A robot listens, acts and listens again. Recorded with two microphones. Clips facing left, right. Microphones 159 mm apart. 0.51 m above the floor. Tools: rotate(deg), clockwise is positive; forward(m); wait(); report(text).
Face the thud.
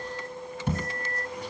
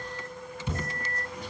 rotate(-55)
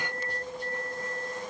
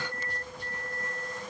wait()
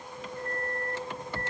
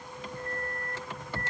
report("I heard a thud, but can't make it out now. It was about straight ahead or 70° left.")